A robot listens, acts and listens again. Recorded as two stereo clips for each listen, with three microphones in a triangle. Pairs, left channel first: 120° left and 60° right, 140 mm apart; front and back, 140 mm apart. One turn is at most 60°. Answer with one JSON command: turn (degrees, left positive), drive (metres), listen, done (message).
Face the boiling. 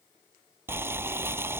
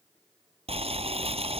{"turn": -60}
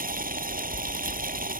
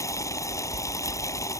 {"turn": -60}
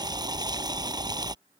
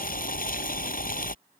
{"done": "Facing the boiling."}